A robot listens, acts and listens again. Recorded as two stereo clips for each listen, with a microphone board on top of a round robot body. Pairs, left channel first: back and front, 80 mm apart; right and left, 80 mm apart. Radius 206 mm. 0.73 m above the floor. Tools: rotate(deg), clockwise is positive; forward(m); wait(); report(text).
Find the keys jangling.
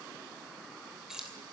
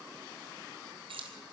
rotate(-85)
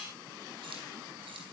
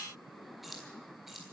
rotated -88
report("Facing the keys jangling.")